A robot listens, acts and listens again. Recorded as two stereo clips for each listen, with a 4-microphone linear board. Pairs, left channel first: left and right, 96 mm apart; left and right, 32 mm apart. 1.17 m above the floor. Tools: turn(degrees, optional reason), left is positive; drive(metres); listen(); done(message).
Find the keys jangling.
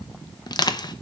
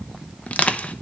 listen()
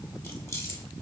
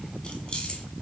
turn(degrees=30, reason="The keys jangling: about 30° left or 150° left.")
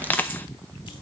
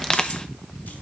listen()
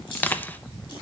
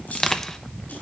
turn(degrees=115, reason="So it is at 115° left.")
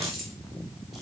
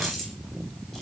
done("Found it: keys jangling, straight ahead.")